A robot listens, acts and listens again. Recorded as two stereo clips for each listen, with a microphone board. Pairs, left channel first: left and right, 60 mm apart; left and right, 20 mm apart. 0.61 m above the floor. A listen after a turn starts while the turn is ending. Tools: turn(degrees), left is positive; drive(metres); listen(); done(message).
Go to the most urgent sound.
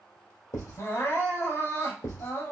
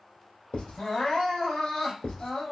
turn(degrees=55)
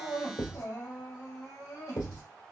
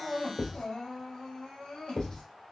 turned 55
turn(degrees=70)
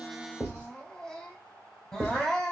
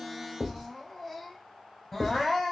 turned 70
drive(metres=1.0)
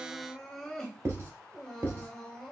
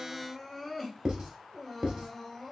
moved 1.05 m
drive(metres=1.0)
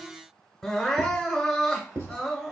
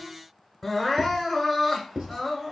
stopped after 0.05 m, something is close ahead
done("I am next to the crying.")